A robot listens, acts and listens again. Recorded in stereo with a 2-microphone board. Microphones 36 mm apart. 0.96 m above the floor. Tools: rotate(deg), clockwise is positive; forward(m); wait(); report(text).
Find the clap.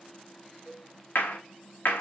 rotate(-70)
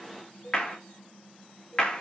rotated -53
rotate(-25)
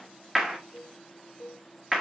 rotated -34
rotate(10)
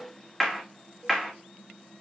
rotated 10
report("Facing the clap.")